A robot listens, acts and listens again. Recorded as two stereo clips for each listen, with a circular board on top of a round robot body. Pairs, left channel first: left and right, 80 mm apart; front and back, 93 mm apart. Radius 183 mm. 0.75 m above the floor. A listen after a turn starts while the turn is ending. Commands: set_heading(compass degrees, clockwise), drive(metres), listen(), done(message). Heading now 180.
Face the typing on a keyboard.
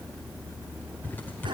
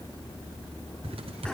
set_heading(20)
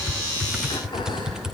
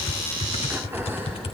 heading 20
done("Found it: typing on a keyboard, straight ahead, under 1 m away.")